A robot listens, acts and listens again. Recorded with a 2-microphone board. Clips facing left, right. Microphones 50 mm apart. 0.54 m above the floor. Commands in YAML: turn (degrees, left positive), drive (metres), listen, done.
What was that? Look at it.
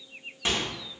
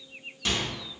turn: 30
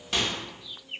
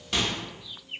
done: "Found it: a microwave, straight ahead."